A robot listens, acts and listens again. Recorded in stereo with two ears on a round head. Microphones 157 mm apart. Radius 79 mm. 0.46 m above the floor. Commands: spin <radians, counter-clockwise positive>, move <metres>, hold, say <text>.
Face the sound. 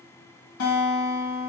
spin 1.57
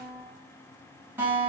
spin -0.17
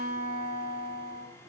say Facing the guitar.